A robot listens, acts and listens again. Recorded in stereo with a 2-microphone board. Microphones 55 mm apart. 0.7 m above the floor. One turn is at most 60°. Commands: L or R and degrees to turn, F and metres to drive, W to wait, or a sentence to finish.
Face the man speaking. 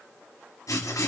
W
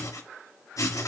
W
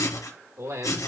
R60
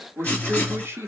R50
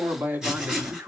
R40
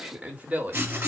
R30
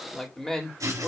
L10
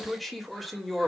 Facing the man speaking.